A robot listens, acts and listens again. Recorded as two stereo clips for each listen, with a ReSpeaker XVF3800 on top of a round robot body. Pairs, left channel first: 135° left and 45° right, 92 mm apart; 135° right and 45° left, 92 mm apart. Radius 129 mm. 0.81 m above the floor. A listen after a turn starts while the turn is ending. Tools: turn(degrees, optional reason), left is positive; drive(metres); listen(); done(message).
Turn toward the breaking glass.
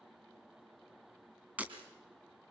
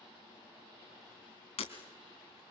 turn(degrees=-120, reason="The breaking glass: 120° right.")
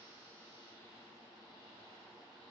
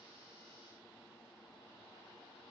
done("I heard breaking glass from this way, but can't make it out now.")